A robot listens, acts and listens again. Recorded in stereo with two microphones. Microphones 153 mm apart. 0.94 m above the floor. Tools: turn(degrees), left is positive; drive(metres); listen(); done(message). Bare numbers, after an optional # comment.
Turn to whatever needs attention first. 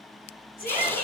# The shout: about 75° left or 105° left.
turn(75)
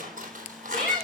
done("Facing the shout.")